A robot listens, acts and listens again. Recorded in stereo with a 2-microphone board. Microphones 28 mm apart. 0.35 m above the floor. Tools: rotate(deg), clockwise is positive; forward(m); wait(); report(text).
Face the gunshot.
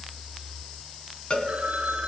wait()
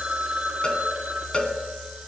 wait()
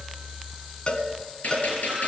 rotate(-70)
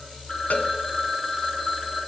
wait()
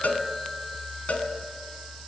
report("I heard a gunshot, but can't make it out now. It was about straight ahead or 40° left.")